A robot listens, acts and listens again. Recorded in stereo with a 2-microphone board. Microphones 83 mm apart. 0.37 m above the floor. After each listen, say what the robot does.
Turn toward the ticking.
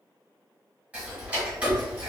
Turn 20° right.
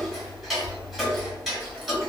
Facing the ticking, 1 to 2 m away.